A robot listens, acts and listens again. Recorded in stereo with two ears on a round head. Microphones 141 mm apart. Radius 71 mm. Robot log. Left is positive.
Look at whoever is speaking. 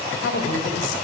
cmd yaw +90
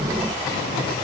cmd idle
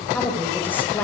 note: The woman speaking is now 10° left.
cmd yaw +10
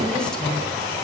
cmd idle
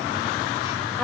end: Found it: a woman speaking, straight ahead, over 4 m away.